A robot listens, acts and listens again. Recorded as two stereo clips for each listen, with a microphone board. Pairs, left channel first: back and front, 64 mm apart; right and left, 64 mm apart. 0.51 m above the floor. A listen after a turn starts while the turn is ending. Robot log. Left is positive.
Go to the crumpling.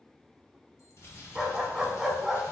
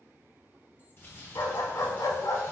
note: The crumpling: 145° right.
cmd yaw -145
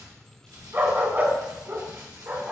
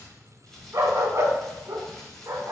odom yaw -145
note: The crumpling is now 10° right.
cmd yaw -10
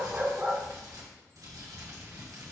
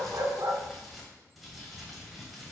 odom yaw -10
cmd fwd 1.0
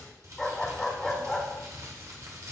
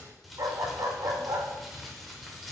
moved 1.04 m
cmd fwd 1.0
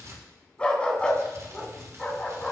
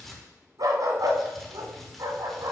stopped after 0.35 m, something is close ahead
end: I am next to the crumpling.